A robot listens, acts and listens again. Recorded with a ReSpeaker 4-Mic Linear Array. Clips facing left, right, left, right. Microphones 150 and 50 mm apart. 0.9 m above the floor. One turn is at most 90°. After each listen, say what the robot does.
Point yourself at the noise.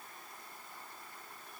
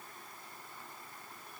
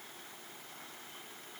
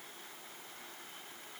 Keep listening.
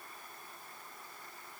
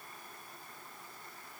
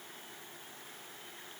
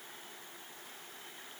Keep listening.
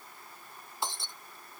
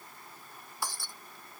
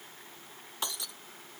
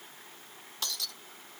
Turn 20° left.
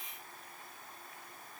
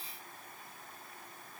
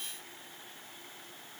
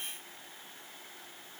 Keep listening.
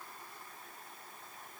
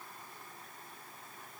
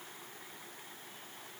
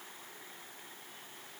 I heard breaking glass, but can't make it out now. It was about straight ahead or 140° left.